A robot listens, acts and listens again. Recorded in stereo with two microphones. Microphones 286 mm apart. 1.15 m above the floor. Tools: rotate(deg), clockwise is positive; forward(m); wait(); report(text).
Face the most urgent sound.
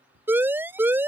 rotate(30)
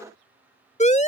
rotate(-25)
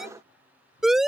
report("Found it: a siren, straight ahead.")